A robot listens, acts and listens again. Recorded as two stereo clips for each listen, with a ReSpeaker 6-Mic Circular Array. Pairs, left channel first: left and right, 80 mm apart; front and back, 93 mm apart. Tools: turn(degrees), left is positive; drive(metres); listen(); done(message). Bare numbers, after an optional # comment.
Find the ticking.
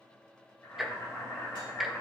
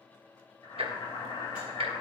# The ticking: 175° right.
turn(-175)
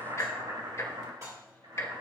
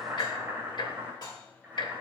# The ticking is now 35° left.
turn(35)
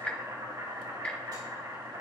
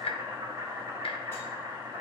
# The ticking is now 15° left.
turn(15)
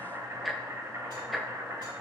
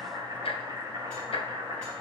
done("Facing the ticking.")